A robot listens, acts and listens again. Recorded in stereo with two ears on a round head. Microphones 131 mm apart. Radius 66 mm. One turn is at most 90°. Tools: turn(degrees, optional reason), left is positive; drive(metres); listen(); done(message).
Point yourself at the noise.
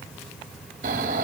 turn(degrees=-60, reason="The snoring: about 60° right or 120° right.")
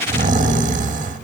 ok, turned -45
turn(degrees=-65, reason="So it is at 65° right.")
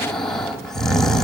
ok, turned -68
done("Found it: snoring, straight ahead, 1 to 2 m away.")